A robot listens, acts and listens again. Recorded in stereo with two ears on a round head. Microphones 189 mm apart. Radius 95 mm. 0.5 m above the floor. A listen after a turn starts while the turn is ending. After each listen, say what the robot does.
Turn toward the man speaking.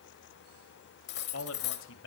Turn 65° left.
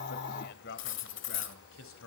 Turn 70° left.
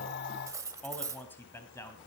Turn 15° left.
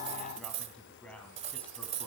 Found it: a man speaking, straight ahead.